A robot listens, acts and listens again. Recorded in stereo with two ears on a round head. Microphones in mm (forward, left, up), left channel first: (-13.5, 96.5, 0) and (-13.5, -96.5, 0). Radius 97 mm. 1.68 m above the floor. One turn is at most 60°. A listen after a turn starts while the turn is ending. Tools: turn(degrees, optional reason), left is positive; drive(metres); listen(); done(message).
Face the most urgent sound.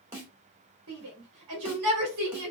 turn(degrees=-60)
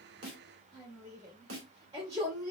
turn(degrees=-20, reason="So it is at 20° right.")
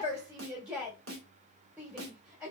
done("Found it: a shout, straight ahead, 2 to 4 m away.")